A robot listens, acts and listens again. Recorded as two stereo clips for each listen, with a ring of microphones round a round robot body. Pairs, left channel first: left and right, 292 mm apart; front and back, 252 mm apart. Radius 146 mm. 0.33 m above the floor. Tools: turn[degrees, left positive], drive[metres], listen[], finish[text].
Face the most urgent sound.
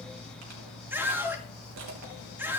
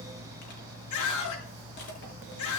Action: finish[Facing the scream, over 4 m away.]